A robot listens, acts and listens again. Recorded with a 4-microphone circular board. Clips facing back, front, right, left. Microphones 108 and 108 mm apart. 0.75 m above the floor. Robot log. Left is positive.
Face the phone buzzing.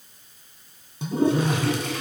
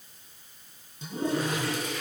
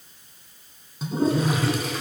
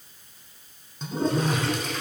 note: The phone buzzing: 115° left.
cmd yaw +115
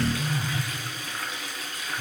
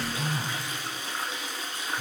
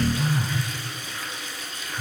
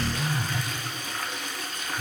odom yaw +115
note: The phone buzzing is now 10° right.
cmd yaw -10
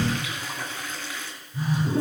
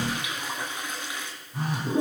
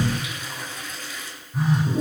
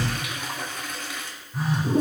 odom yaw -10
end: Facing the phone buzzing, over 4 m away.